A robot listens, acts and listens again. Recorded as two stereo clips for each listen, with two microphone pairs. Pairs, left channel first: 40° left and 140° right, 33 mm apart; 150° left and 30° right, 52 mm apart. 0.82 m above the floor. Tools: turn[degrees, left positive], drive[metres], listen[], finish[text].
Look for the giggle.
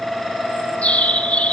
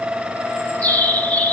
Action: listen[]
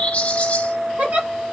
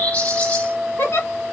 Thought: The giggle: 175° right.
Action: turn[-175]
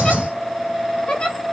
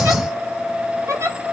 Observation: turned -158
Thought: The giggle is now 15° right.
Action: turn[-15]
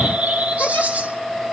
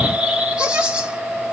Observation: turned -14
Action: listen[]
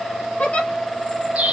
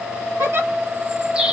Action: finish[Found it: a giggle, straight ahead, 1 to 2 m away.]